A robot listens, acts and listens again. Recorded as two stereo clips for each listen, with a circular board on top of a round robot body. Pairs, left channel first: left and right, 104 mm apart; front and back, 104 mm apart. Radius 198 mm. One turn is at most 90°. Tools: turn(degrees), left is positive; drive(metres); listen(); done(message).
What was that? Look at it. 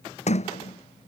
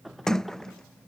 turn(degrees=85)
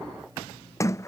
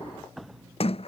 turn(degrees=25)
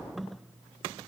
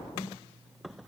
done("Facing the sliding door.")